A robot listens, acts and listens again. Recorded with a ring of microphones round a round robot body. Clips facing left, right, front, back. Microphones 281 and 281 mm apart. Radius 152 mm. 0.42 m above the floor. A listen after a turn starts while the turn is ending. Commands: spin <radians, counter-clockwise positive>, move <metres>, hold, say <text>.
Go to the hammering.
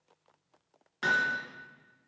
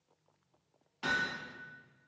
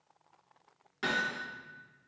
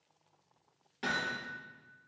spin 1.31
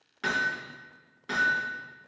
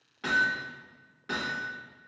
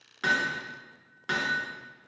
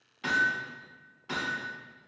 move 1.0
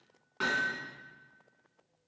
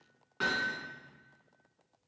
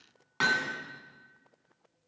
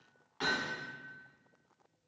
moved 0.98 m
move 1.0
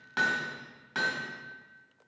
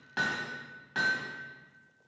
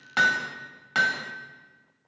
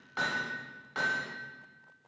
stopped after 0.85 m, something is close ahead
spin 0.17
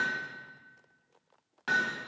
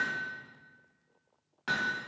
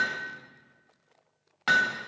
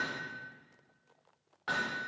say I am next to the hammering.